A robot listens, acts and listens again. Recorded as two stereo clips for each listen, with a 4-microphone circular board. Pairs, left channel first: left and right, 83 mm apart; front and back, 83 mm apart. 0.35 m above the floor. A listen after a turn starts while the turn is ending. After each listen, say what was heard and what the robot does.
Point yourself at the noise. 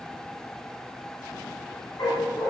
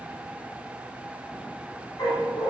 The dog barking: 45° left. Turn 45° left.
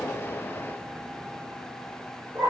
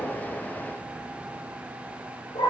The dog barking is now 20° right. Turn 20° right.
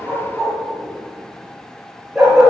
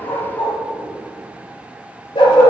Found it: a dog barking, straight ahead.